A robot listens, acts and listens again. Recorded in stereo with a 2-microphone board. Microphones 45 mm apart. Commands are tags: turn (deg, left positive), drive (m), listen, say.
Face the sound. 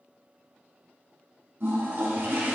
<turn deg="-50"/>
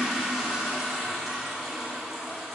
<say>Facing the toilet flushing, 1 to 2 m away.</say>